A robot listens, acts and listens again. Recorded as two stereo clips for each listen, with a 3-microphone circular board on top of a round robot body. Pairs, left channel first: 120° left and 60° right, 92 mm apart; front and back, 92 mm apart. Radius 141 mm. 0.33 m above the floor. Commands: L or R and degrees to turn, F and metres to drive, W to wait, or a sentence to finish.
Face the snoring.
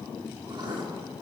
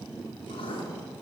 W
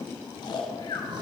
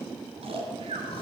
L165
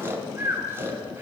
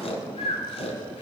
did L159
Found it: snoring, straight ahead.